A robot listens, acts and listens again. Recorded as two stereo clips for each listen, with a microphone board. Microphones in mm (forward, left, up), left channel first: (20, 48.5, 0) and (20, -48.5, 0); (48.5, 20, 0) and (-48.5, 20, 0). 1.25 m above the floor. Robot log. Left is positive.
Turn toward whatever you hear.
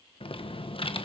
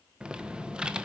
note: The typing on a keyboard: 100° left.
cmd yaw +100
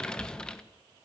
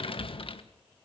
note: The typing on a keyboard is now 10° left.
cmd yaw +10
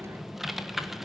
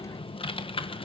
end: Found it: typing on a keyboard, straight ahead.